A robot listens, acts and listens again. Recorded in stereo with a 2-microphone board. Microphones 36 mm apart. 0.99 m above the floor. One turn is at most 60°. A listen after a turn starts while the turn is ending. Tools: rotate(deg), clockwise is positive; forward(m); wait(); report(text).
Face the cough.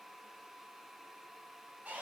wait()
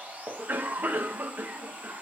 rotate(60)
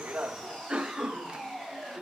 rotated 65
rotate(35)
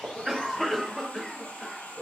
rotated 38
report("Facing the cough, under 1 m away.")